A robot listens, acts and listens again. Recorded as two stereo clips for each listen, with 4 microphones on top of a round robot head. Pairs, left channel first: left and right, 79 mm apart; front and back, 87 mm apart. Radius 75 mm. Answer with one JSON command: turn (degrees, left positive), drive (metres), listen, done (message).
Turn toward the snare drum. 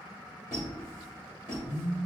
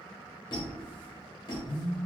{"listen": true}
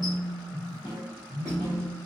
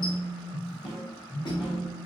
{"turn": 95}
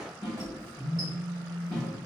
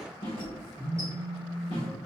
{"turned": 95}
{"turn": 25}
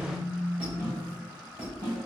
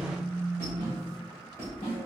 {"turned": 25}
{"turn": -10}
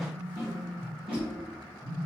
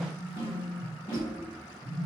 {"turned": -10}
{"done": "Facing the snare drum."}